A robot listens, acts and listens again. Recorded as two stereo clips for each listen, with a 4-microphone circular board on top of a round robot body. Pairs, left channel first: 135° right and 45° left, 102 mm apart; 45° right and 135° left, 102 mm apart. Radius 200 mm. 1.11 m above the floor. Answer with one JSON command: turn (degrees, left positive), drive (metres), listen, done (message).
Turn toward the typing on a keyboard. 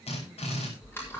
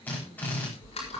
{"turn": -65}
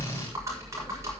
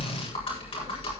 {"turn": -15}
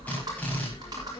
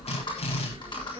{"done": "Found it: typing on a keyboard, straight ahead."}